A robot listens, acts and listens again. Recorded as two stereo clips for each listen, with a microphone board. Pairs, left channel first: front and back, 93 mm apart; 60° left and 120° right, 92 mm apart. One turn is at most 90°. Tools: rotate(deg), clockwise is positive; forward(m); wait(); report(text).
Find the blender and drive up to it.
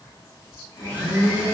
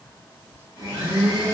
rotate(65)
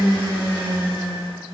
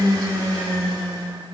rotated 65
rotate(-20)
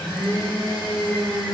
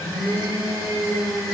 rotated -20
rotate(-10)
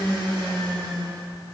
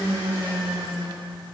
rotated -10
forward(1.0)
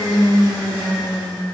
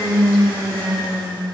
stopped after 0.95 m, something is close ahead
report("Arrived at the blender, straight ahead.")